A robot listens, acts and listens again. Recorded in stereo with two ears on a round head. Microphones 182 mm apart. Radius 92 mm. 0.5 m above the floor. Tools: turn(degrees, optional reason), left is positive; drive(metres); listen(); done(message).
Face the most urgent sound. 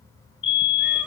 turn(degrees=65, reason="The fire alarm: about 65° left or 115° left.")
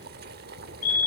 turn(degrees=40, reason="So it is at 40° left.")
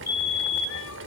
turn(degrees=15, reason="The fire alarm is now 15° left.")
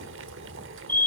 done("Found it: a fire alarm, straight ahead, over 4 m away.")